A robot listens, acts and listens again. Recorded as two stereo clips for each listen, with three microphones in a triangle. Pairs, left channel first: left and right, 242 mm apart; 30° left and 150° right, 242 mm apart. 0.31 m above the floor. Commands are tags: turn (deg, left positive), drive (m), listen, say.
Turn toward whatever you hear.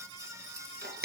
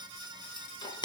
<turn deg="-40"/>
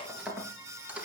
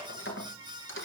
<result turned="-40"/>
<say>Facing the keys jangling, 2 to 4 m away.</say>